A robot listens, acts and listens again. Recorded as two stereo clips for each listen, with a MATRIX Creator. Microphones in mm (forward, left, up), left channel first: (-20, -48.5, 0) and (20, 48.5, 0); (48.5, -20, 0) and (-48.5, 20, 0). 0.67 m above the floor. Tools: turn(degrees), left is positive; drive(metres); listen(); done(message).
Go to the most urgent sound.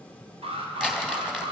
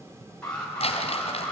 turn(degrees=60)
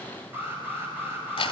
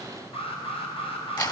drive(metres=1.0)
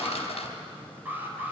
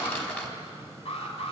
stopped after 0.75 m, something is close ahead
done("Something is in my way. I am facing the alarm but have not reached it.")